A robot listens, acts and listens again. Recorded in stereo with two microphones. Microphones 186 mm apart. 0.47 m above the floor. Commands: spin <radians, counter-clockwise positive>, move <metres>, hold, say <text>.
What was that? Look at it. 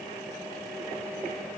hold
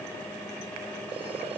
hold
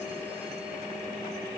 say I can't make out anything to turn to.